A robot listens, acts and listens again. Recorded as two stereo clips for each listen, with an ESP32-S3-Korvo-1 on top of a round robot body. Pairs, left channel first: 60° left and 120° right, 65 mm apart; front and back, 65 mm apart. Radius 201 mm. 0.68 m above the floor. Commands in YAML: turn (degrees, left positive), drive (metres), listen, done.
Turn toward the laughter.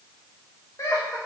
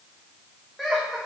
turn: 90
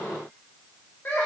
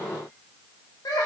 done: "Found it: laughter, straight ahead, 2 to 4 m away."